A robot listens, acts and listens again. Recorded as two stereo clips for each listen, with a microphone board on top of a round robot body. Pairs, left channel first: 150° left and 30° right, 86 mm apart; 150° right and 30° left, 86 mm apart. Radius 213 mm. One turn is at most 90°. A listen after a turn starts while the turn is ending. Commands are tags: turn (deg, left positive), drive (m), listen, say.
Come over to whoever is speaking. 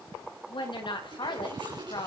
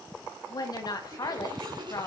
<turn deg="90"/>
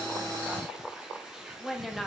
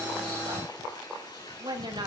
<turn deg="60"/>
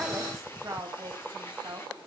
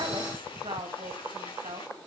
<turn deg="25"/>
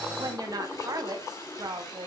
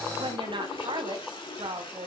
<turn deg="15"/>
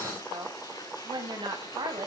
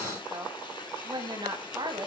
<drive m="1.0"/>
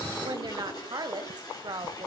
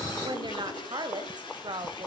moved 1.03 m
<drive m="1.0"/>
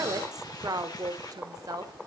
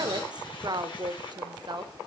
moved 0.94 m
<turn deg="10"/>
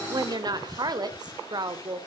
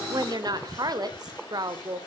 <drive m="1.0"/>
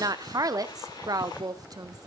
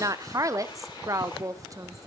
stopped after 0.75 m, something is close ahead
<say>I am next to the woman speaking.</say>